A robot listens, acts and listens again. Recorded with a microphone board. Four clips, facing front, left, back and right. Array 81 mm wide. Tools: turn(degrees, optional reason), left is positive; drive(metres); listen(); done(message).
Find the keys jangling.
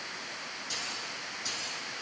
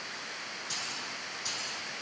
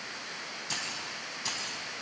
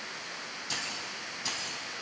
turn(degrees=-140, reason="The keys jangling: 140° right.")
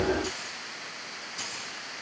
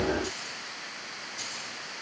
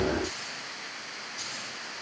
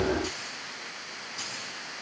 turn(degrees=-40, reason="The keys jangling is now 40° right.")
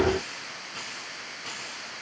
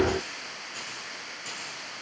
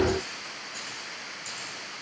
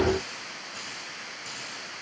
done("Found it: keys jangling, straight ahead.")